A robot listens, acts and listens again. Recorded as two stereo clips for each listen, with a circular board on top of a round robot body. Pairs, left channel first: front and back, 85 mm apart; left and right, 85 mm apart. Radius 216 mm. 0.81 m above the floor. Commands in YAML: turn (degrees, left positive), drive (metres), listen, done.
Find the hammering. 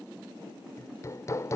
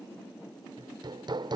turn: -55
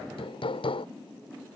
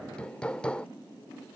turn: 10
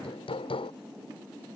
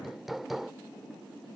done: "Facing the hammering."